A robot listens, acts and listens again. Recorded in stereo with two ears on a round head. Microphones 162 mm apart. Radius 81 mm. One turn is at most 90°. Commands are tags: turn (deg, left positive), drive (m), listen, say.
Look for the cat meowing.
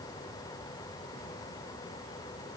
<listen/>
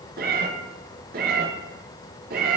<turn deg="-55"/>
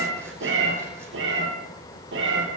<turn deg="-70"/>
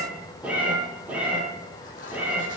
<turn deg="-10"/>
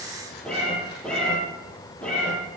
<say>Facing the cat meowing, over 4 m away.</say>